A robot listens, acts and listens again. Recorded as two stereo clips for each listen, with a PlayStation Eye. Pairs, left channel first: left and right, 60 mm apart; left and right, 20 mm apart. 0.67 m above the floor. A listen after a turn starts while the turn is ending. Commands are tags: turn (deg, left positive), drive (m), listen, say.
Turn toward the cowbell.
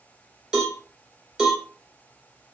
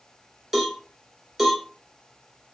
<turn deg="-30"/>
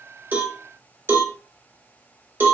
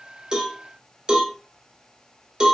<turn deg="-140"/>
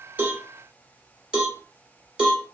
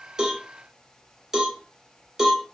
<turn deg="-10"/>
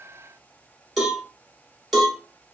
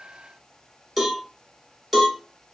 <say>Found it: a cowbell, straight ahead.</say>